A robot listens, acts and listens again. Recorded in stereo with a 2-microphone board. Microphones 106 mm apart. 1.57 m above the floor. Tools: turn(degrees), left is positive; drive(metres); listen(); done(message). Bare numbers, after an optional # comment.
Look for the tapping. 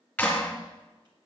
listen()
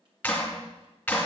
listen()
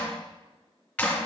done("I can't make out tapping, only a clap.")